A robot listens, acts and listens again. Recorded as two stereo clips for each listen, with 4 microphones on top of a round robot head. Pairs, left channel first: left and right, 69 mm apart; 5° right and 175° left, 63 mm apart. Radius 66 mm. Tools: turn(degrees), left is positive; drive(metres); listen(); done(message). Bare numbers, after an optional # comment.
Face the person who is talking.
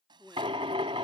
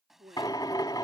# The man speaking: 170° left.
turn(170)
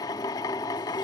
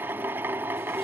listen()
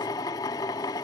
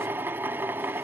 listen()
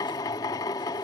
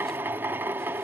done("Facing where the man speaking came from. I can't hear it now.")